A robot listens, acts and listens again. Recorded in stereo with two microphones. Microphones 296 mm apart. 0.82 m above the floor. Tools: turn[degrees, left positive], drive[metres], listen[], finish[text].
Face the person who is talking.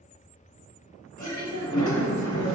Thought: The woman speaking: about 75° right or 105° right.
Action: turn[-75]
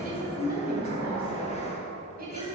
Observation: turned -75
Thought: So it is at 30° right.
Action: turn[-30]
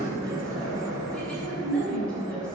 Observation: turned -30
Action: finish[Facing the woman speaking.]